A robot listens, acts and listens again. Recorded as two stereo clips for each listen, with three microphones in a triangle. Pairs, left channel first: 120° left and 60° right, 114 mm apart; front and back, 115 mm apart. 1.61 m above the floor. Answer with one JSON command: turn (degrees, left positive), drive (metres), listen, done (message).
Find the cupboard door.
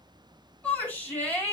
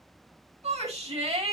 {"listen": true}
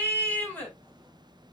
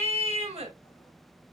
{"listen": true}
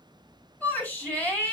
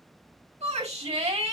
{"done": "I can't make out a cupboard door, only a shout."}